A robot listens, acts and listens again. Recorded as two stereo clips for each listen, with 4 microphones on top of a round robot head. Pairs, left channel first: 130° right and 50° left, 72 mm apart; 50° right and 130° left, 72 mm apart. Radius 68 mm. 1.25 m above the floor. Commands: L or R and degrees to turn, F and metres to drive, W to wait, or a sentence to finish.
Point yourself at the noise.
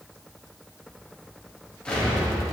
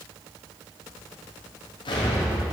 R50
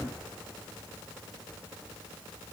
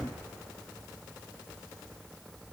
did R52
I heard an explosion from this way, but can't make it out now.